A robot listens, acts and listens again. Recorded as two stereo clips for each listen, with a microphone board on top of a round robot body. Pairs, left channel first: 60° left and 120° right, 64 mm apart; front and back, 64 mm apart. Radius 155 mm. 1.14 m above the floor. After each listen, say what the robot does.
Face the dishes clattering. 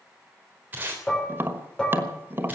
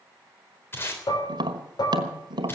Turn 20° right.
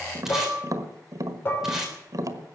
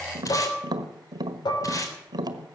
Found it: dishes clattering, straight ahead.